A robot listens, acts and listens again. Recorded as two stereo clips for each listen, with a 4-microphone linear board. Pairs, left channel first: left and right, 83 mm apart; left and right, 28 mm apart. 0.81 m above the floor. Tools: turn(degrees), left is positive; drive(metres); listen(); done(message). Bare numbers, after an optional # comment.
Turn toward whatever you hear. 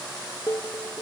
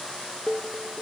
# The dishes clattering: about 30° left or 150° left.
turn(30)
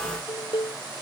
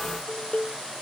# So it is at 115° left.
turn(115)
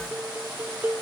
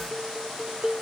# The dishes clattering is now 20° right.
turn(-20)
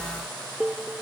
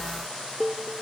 # The dishes clattering is now 10° right.
turn(-10)
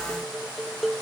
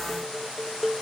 done("Found it: dishes clattering, straight ahead.")